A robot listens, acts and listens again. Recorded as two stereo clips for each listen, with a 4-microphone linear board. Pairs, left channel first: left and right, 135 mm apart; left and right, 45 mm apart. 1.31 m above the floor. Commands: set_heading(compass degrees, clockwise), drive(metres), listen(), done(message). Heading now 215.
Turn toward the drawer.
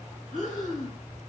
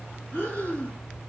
listen()
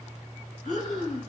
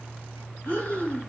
listen()
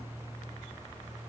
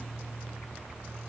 done("I can't make out a drawer to turn to.")